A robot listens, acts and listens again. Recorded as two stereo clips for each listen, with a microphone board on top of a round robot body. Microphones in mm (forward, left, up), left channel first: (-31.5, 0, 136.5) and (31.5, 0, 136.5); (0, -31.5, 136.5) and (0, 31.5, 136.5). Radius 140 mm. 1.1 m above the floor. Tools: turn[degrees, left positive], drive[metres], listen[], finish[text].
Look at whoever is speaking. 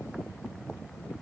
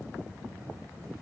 Action: listen[]
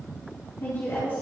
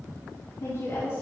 Thought: The woman speaking: 130° right.
Action: turn[-130]
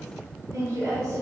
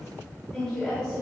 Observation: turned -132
Thought: The woman speaking is now 15° right.
Action: turn[-15]
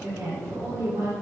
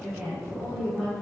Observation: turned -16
Action: finish[Facing the woman speaking, over 4 m away.]